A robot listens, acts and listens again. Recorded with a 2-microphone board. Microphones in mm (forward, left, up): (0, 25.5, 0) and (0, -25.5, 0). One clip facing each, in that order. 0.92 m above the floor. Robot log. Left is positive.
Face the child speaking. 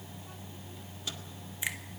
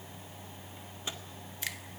cmd idle
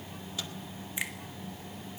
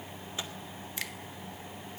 cmd idle
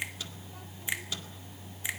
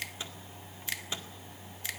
end: I can't make out a child speaking to turn to.